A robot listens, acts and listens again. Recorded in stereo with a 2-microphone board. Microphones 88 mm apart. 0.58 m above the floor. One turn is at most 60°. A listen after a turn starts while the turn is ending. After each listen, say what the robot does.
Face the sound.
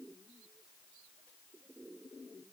Keep listening.
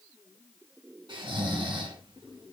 Turn 60° right.
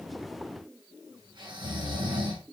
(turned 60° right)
Turn 60° right.
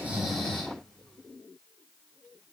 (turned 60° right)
Turn 10° left.
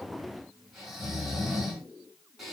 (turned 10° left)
Facing the snoring.